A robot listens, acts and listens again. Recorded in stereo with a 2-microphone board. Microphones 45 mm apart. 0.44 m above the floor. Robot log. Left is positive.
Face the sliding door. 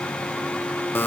cmd idle
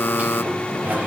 note: The sliding door: about 35° right or 145° right.
cmd yaw -35
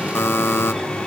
end: Found it: a sliding door, straight ahead.